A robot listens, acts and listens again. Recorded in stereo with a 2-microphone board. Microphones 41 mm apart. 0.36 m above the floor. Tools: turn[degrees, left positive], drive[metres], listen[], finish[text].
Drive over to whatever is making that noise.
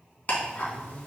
Thought: The ticking: about 35° left or 145° left.
Action: turn[35]
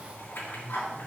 Thought: So it is at 110° left.
Action: turn[110]
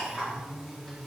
Thought: The ticking is now 10° left.
Action: turn[10]
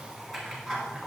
Action: drive[1.0]
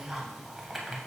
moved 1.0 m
Action: drive[1.0]
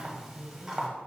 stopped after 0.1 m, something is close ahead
Thought: The ticking is now 10° right.
Action: turn[-10]
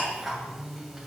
Action: finish[Arrived at the ticking, straight ahead.]